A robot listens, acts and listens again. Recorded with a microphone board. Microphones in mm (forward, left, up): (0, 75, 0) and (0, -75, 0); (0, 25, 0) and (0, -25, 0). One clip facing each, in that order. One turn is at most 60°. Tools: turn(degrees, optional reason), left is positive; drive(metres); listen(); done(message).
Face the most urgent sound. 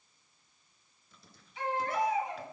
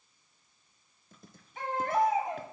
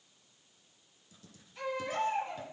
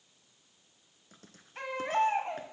turn(degrees=-50, reason="The baby crying: about 50° right or 130° right.")
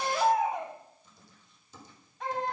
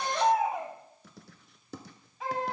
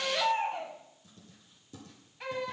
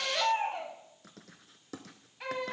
done("Found it: a baby crying, straight ahead.")